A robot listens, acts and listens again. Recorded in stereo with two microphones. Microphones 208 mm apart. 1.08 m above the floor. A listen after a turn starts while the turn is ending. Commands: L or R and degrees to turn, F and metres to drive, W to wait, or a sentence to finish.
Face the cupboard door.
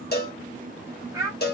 W
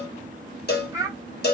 W
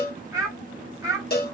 I can't make out a cupboard door to turn to.